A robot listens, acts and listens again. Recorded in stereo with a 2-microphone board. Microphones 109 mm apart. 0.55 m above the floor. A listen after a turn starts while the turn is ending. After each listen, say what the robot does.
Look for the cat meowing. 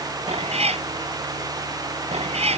Turn 75° right.
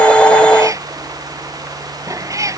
Turn 30° right.
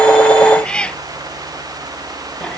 Turn 10° left.
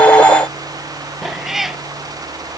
Facing the cat meowing.